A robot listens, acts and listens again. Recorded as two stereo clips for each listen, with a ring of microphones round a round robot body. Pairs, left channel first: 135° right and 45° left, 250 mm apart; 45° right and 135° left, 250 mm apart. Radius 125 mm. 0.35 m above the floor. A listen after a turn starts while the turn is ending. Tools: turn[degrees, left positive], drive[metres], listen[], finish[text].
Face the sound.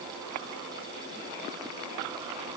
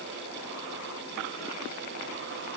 Action: listen[]
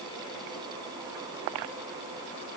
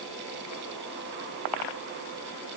Action: listen[]
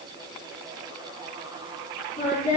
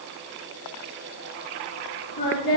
Thought: The singing: 80° right.
Action: turn[-80]
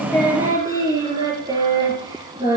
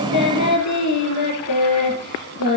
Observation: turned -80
Thought: The singing is now 30° right.
Action: turn[-30]
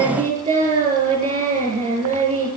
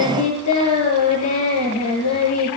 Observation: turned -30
Thought: The singing is now 20° right.
Action: turn[-20]
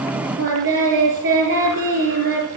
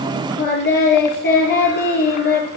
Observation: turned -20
Action: finish[Facing the singing.]